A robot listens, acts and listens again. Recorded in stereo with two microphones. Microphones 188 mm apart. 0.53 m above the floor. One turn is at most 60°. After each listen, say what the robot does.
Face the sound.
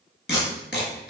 Turn 60° left.
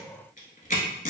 Turn 45° left.
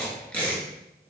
Found it: tape being pulled, straight ahead.